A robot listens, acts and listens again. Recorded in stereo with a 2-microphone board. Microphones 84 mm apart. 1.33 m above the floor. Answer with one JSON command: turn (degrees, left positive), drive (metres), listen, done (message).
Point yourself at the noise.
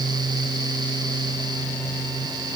{"listen": true}
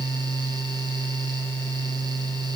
{"listen": true}
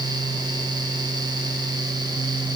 {"done": "I can't make out anything."}